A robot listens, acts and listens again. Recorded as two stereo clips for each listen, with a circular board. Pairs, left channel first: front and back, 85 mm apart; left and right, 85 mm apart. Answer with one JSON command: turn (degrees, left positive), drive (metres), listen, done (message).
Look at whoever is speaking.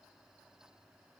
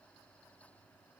{"listen": true}
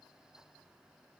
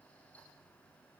{"listen": true}
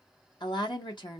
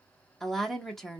{"done": "Facing the woman speaking, 1 to 2 m away."}